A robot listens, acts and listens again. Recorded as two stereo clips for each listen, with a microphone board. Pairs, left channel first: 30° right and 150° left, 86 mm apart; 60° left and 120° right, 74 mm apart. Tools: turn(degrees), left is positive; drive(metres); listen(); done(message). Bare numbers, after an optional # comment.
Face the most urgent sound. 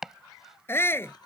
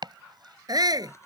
# The shout: 90° right.
turn(-90)
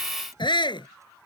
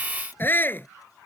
done("Found it: a shout, straight ahead.")